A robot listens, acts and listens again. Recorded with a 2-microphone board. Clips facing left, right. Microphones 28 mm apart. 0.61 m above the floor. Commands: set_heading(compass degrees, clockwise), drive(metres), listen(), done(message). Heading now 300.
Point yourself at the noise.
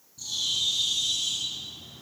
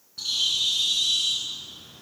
set_heading(0)
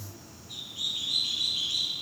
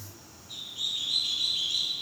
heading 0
done("Facing the bird.")